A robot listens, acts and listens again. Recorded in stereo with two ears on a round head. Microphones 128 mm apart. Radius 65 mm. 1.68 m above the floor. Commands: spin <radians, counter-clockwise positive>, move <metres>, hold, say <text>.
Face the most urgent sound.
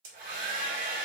hold
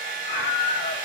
spin 1.57
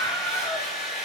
spin 0.26
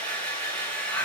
hold
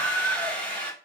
say Found it: a scream, straight ahead, 2 to 4 m away.